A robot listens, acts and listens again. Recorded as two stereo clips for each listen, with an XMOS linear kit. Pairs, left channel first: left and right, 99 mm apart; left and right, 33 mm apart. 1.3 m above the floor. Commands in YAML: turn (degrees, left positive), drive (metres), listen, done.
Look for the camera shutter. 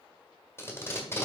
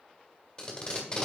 listen: true
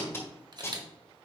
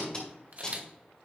turn: -45
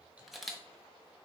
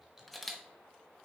done: "Facing the camera shutter."